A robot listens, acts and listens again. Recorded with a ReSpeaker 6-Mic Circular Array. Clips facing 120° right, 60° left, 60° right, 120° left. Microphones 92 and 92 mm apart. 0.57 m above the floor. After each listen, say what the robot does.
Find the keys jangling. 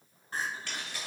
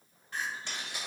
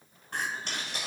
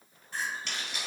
Turn 10° right.
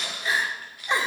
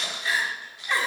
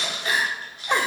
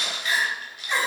Facing the keys jangling.